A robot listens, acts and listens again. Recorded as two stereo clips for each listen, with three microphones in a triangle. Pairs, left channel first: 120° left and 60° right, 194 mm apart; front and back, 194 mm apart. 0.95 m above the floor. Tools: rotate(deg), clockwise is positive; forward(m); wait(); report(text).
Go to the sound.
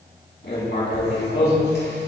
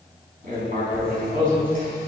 rotate(-140)
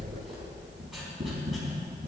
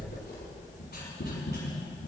rotate(-30)
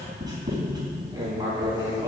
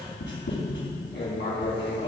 rotate(-10)
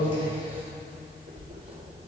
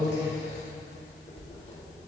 forward(1.0)
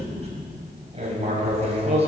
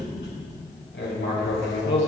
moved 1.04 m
forward(1.0)
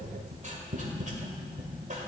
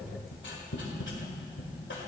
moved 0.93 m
rotate(10)
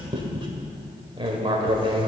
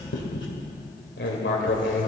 forward(1.0)
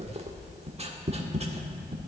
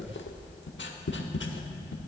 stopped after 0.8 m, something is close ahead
report("I am next to the writing.")